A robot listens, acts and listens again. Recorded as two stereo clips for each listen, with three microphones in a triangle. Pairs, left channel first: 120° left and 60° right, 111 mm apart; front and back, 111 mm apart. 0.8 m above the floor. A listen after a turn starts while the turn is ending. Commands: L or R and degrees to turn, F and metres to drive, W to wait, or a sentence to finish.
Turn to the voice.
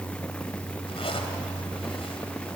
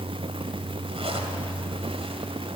W
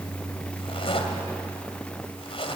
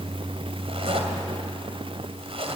W
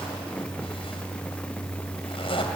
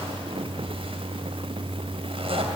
I can't make out anyone speaking, only a zipper.